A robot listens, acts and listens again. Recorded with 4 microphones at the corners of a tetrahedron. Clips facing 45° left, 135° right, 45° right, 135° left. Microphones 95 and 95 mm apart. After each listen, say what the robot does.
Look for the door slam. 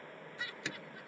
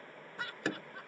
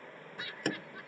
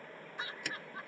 Turn 90° right.
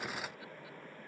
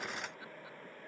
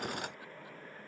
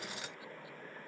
I heard a door slam from this way, but can't make it out now.